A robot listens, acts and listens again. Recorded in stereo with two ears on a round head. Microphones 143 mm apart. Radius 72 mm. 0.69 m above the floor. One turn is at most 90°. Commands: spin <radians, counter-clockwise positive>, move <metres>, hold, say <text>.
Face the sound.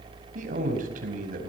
spin -0.96
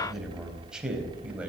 say Facing the man speaking.